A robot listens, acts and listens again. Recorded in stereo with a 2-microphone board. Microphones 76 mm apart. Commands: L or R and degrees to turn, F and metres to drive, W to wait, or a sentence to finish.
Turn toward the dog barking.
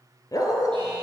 L50
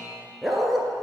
Facing the dog barking, 1 to 2 m away.